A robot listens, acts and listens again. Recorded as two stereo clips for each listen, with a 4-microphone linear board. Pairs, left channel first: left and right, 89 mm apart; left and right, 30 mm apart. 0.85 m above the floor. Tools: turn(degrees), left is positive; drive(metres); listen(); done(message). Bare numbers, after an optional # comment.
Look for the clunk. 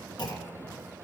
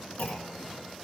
# The clunk: about 50° left or 130° left.
turn(50)
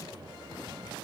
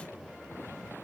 listen()
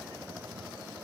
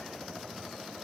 done("I heard a clunk, but can't make it out now. It was about straight ahead or 80° left.")